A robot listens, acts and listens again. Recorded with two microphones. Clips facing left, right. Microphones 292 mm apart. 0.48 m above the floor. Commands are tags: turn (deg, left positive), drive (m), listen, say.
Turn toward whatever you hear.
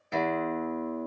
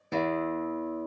<turn deg="-50"/>
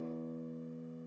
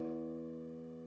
<turn deg="-75"/>
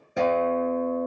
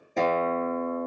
<turn deg="10"/>
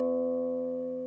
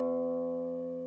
<say>Found it: a guitar, straight ahead.</say>